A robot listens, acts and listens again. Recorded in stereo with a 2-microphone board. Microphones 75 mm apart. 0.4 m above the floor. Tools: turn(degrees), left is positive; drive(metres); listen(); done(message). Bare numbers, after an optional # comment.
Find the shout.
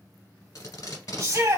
# The shout: about 40° right or 140° right.
turn(-40)
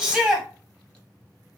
# So it is at 10° right.
turn(-10)
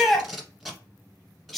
done("Found it: a shout, straight ahead, 1 to 2 m away.")